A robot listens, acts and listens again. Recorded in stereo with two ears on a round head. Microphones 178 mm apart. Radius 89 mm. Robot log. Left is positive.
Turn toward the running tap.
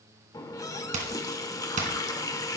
note: The running tap: about 20° left or 160° left.
cmd yaw +20
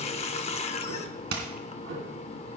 note: So it is at 140° left.
cmd yaw +140
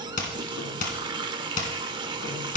note: The running tap is now 30° right.
cmd yaw -30
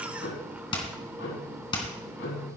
note: The running tap is now 10° right.
cmd yaw -10
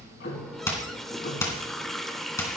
end: Found it: a running tap, straight ahead.